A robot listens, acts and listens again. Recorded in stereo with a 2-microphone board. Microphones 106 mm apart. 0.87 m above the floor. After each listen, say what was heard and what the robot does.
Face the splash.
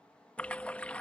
Turn 30° left.
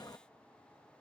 So it is at 135° left. Turn 135° left.
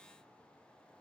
I heard a splash from this way, but can't make it out now.